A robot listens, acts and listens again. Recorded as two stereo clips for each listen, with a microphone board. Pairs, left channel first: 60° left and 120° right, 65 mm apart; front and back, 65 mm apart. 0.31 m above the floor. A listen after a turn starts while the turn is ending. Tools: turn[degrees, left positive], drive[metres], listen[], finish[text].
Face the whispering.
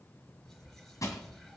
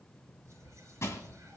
Thought: The whispering: 145° left.
Action: turn[145]
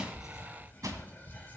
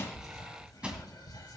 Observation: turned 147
Action: finish[Facing the whispering.]